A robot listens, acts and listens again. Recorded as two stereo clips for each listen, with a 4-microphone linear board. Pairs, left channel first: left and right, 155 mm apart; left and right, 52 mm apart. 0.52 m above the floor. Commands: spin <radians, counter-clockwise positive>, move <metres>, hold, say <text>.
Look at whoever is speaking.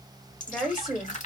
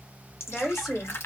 spin 0.52
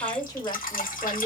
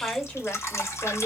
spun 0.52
spin 2.62
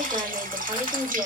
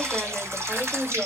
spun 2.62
spin -0.35
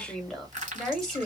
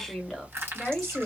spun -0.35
say Facing the woman speaking.